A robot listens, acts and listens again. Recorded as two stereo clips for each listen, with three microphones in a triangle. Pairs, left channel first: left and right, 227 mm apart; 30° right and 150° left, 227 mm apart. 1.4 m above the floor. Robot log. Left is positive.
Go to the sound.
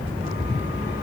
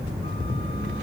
cmd idle
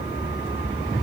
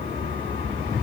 cmd idle
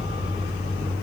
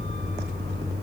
end: I can't make out anything to turn to.